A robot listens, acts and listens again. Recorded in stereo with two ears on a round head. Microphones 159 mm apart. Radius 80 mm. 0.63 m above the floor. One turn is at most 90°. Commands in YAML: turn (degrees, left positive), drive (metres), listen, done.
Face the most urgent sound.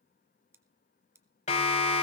turn: 40
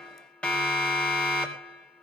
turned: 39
turn: 10
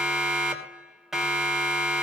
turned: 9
done: "Facing the siren, 2 to 4 m away."